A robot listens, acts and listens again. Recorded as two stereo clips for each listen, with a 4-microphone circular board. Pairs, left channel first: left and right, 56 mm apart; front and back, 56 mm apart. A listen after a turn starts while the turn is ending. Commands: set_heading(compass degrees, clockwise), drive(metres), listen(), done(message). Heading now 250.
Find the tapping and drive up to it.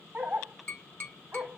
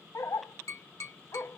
set_heading(215)
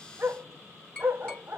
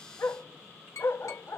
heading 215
set_heading(195)
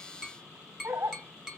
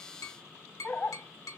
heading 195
drive(1.0)
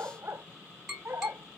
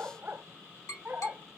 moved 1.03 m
drive(1.0)
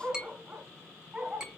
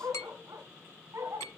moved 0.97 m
set_heading(210)
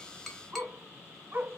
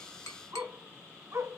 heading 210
drive(1.0)
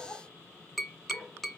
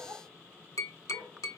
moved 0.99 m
drive(1.0)
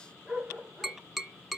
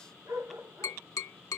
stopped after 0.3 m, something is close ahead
done("I am next to the tapping.")